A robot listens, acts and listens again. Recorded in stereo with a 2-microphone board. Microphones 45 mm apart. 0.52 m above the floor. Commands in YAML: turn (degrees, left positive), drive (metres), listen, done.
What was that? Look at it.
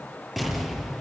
turn: 30
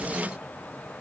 listen: true
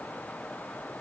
done: "I heard an explosion, but can't make it out now. It was about 30° right or 150° left."